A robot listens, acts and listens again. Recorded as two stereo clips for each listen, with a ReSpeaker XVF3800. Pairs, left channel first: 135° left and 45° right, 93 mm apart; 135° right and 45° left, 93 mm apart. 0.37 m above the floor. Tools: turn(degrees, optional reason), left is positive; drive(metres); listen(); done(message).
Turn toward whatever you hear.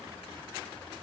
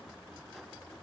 listen()
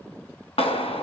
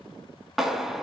turn(degrees=135, reason="The clap: 135° left.")
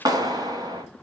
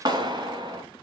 done("Found it: a clap, straight ahead, 2 to 4 m away.")